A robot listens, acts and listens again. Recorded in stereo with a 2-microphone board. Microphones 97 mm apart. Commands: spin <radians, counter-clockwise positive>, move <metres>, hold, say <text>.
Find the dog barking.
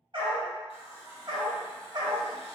spin -0.70
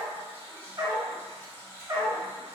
spin -0.61
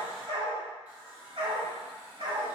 spin -0.96
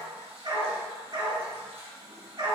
spin -0.87
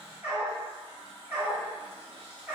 spin -0.26
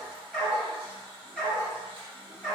say Found it: a dog barking, straight ahead.